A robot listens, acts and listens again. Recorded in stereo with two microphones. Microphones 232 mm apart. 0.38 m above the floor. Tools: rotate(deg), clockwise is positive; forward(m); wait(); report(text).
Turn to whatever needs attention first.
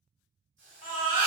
rotate(-35)
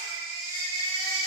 rotate(-105)
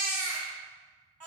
rotate(10)
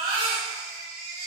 report("Facing the baby crying, 1 to 2 m away.")